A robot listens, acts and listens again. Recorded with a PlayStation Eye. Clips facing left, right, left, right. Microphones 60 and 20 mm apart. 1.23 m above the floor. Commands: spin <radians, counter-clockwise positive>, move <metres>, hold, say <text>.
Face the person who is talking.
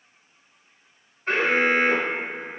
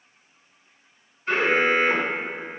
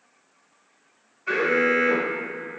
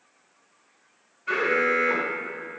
hold
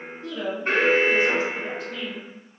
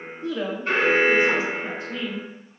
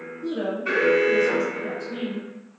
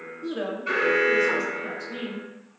spin -0.35
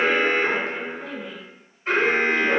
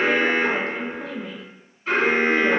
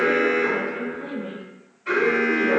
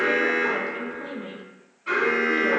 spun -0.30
spin -2.44
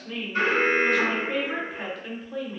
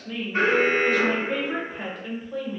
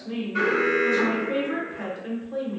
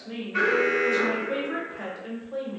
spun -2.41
say Facing the woman speaking, under 1 m away.